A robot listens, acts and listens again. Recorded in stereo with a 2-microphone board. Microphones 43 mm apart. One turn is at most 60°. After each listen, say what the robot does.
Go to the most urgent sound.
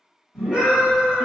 Turn 30° right.
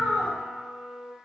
Turn 25° left.
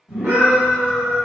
Turn 10° right.
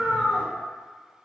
Drive 1.0 m forward.
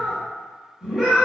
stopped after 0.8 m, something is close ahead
I am next to the scream.